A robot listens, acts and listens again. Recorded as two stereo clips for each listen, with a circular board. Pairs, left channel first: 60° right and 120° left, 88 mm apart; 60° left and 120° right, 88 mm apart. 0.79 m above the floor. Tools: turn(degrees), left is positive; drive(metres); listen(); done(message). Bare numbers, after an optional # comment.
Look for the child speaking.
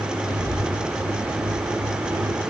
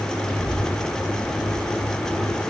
# The child speaking: 15° right.
turn(-15)
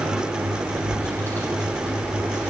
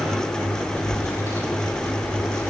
done("Facing the child speaking, over 4 m away.")